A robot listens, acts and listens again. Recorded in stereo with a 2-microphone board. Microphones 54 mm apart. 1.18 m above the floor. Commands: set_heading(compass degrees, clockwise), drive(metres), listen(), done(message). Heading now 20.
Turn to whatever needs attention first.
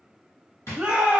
set_heading(40)
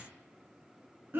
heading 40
set_heading(180)
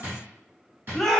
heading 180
done("Found it: a shout, straight ahead, under 1 m away.")